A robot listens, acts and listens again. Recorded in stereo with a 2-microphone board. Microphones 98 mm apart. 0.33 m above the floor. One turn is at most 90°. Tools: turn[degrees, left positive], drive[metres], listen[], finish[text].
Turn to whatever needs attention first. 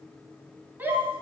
Thought: The shout: about 20° right or 160° right.
Action: turn[-20]
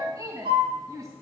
Thought: So it is at 140° right.
Action: turn[-90]
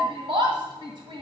Thought: The shout is now 75° right.
Action: turn[-75]
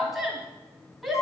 Action: finish[Facing the shout, 1 to 2 m away.]